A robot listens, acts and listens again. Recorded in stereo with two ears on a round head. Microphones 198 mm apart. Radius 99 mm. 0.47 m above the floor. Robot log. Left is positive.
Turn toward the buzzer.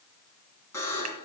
cmd yaw +30
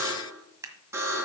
note: So it is at 15° right.
cmd yaw -15
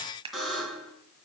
end: Facing the buzzer.